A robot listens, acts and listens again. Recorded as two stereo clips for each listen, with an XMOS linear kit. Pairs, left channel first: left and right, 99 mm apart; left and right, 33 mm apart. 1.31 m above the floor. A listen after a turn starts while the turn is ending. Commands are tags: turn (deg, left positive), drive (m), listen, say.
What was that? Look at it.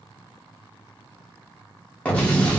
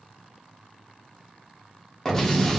<turn deg="30"/>
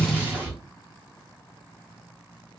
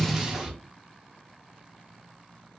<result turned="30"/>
<turn deg="-15"/>
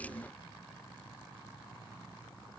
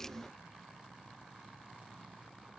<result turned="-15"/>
<say>Facing where the explosion came from. I can't hear it now.</say>